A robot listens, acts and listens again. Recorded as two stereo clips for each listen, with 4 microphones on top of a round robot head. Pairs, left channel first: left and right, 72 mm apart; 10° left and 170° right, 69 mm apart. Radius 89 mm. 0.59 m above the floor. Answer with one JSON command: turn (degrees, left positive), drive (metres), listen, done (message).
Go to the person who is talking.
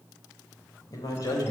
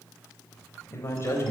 {"turn": 60}
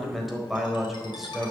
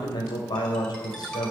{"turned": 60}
{"drive": 1.0}
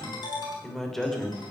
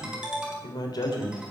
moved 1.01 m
{"drive": 1.0}
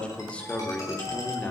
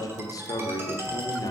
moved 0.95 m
{"turn": 20}
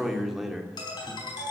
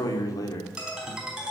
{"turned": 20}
{"drive": 1.0}
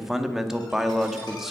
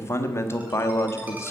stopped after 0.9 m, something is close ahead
{"done": "Arrived at the man speaking, straight ahead."}